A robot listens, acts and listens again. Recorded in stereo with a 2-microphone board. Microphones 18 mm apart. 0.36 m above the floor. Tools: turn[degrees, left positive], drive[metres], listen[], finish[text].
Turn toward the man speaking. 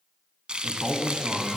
Thought: The man speaking: about 55° right or 125° right.
Action: turn[-55]
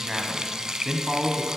Thought: So it is at 30° right.
Action: turn[-30]
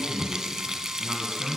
Thought: The man speaking is now 40° right.
Action: turn[-40]
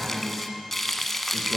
Action: finish[Found it: a man speaking, straight ahead, 2 to 4 m away.]